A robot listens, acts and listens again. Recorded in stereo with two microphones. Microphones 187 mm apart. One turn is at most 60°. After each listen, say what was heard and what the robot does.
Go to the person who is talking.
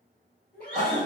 The child speaking: about 55° left or 125° left. Turn 55° left.
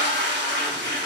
Keep listening.
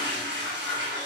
Keep listening.
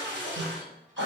I heard a child speaking, but can't make it out now. It was about straight ahead or 70° left. I did not reach it.